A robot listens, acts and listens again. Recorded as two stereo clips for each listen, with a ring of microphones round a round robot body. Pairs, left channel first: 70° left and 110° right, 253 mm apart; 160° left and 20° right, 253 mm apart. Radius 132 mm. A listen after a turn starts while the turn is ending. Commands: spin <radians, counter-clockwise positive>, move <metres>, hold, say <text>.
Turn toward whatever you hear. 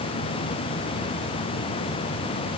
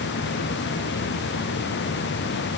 hold
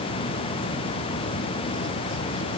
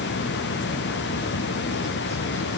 hold
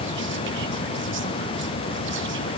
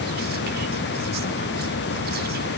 say I can't make out anything to turn to.